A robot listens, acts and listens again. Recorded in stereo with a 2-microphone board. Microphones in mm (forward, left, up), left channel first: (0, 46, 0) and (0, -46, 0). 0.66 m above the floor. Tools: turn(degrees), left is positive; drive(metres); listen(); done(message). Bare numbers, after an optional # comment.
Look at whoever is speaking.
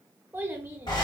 # The child speaking: about 25° right or 155° right.
turn(-25)
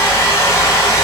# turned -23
listen()
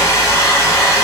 listen()
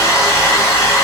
done("I heard a child speaking, but can't make it out now. It was about straight ahead or 130° right.")